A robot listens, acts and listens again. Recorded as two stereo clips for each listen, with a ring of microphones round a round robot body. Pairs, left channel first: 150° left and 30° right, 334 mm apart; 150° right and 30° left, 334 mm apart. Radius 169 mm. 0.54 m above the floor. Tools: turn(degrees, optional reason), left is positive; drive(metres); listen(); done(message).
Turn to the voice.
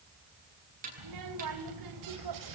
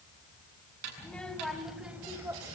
turn(degrees=-50, reason="The child speaking: 50° right.")
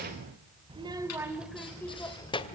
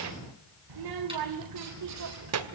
turn(degrees=80, reason="The child speaking is now 80° left.")
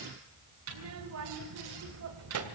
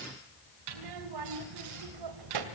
turn(degrees=15, reason="The child speaking is now 15° left.")
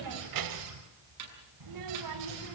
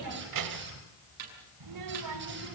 done("Found it: a child speaking, straight ahead.")